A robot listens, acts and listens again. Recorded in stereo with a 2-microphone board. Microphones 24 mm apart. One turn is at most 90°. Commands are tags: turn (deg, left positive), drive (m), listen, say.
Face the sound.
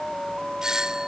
<turn deg="-25"/>
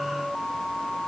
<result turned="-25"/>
<listen/>
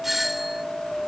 <say>Found it: a doorbell, straight ahead.</say>